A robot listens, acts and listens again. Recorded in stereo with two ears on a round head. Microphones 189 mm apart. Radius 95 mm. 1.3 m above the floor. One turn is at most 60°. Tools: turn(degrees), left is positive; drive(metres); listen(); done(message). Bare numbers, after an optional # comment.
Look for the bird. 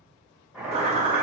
# The bird: about 30° right or 150° right.
turn(-30)
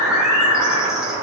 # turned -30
done("Facing the bird, 1 to 2 m away.")